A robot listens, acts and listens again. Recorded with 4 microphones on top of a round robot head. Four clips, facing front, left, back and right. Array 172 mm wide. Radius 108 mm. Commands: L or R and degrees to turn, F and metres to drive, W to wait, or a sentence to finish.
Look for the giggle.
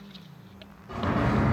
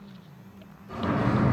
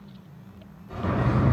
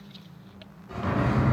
W
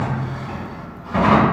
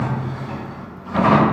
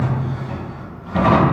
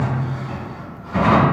W
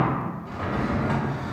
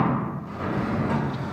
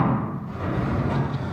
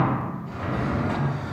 I can't make out a giggle, only a drawer.